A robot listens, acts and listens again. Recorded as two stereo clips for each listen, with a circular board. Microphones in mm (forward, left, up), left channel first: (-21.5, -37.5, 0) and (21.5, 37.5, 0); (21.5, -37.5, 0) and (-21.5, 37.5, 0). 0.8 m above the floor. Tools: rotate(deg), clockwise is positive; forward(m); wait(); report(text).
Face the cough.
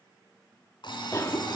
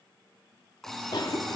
rotate(75)
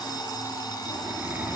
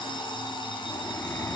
wait()
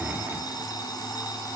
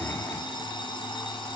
report("Found it: a cough, straight ahead.")